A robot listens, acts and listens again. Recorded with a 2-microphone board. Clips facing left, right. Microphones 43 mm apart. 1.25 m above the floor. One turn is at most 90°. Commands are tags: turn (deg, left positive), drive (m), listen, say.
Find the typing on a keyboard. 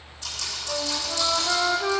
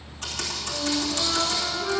<turn deg="-50"/>
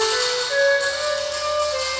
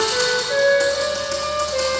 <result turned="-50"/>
<listen/>
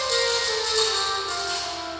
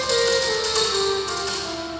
<listen/>
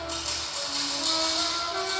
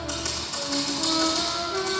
<turn deg="-75"/>
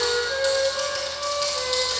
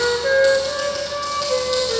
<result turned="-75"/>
<listen/>
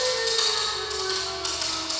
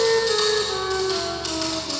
<say>Found it: typing on a keyboard, straight ahead, 2 to 4 m away.</say>